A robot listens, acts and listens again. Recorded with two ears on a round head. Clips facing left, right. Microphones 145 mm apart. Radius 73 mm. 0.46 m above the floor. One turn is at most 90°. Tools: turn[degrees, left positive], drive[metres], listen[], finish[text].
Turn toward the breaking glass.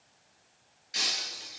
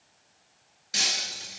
Thought: The breaking glass: about 60° right or 120° right.
Action: turn[-60]
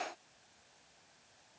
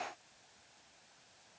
Action: listen[]
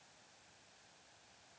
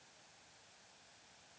Action: finish[I heard breaking glass, but can't make it out now. It was about straight ahead or 60° right.]